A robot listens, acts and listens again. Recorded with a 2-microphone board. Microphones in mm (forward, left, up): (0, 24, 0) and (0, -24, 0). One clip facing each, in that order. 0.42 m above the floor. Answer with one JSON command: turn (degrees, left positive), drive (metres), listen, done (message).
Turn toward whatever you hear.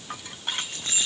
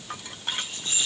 {"turn": 60}
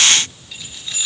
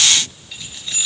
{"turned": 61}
{"done": "Found it: keys jangling, straight ahead."}